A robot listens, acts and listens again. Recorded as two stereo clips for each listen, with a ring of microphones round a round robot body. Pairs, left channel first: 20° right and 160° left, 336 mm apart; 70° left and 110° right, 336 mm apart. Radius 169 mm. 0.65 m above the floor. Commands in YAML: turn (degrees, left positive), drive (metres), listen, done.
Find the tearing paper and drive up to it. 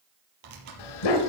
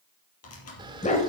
turn: 120
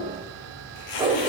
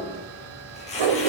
drive: 1.0
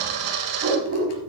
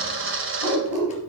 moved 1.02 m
listen: true
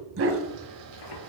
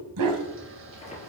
drive: 1.0
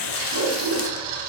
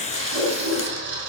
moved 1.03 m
drive: 1.0
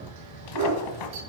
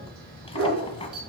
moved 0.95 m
drive: 1.0
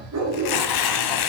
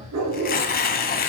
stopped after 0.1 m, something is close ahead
done: "I am next to the tearing paper."